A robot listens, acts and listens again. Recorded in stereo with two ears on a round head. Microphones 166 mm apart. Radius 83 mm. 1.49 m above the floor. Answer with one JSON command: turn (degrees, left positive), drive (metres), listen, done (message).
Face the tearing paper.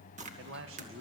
{"turn": -40}
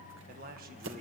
{"turn": -100}
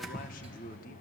{"done": "Found it: tearing paper, straight ahead."}